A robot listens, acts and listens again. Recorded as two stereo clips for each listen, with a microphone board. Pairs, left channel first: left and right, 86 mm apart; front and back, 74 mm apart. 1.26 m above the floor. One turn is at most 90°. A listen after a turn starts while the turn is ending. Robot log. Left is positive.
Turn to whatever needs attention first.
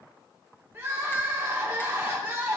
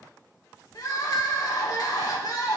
note: The crying: 25° right.
cmd yaw -25
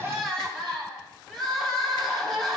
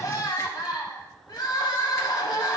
end: Found it: crying, straight ahead.